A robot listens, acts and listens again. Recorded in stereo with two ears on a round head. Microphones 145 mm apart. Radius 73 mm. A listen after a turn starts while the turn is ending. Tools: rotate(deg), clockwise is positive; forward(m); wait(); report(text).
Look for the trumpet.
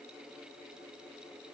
wait()
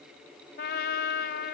rotate(-70)
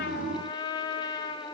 rotate(-30)
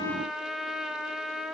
report("Facing the trumpet.")